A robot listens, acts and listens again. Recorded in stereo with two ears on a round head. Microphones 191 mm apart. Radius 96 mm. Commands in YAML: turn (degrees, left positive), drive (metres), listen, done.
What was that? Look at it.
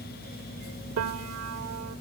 turn: -65
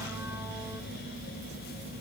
listen: true
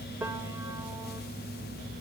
turn: -10
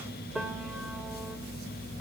done: "Facing the piano, 1 to 2 m away."